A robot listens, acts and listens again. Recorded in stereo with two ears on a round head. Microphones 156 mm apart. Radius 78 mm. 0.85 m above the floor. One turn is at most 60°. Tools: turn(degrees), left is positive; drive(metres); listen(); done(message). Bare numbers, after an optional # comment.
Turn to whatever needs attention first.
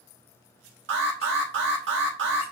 # The alarm: about 70° right or 110° right.
turn(-60)
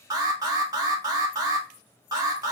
# So it is at 20° right.
turn(-20)
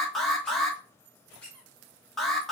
done("Found it: an alarm, straight ahead.")